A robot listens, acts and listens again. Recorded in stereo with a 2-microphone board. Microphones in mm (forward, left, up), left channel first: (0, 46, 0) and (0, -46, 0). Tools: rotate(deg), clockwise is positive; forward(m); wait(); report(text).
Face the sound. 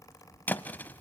rotate(-20)
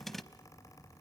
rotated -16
report("Facing the thud, under 1 m away.")